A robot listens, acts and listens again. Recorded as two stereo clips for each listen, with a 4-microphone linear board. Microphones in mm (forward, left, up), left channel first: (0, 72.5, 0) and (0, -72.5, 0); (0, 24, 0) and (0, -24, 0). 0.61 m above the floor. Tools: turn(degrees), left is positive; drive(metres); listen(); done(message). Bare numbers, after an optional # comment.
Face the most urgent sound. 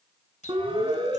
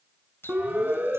# The siren: about 35° right or 145° right.
turn(-35)
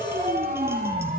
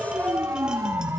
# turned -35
# So it is at 110° right.
turn(-110)
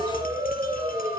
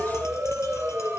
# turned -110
# The siren is now 25° right.
turn(-25)
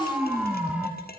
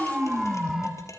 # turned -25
# The siren is now 10° right.
turn(-10)
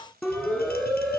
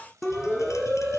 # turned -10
done("Facing the siren.")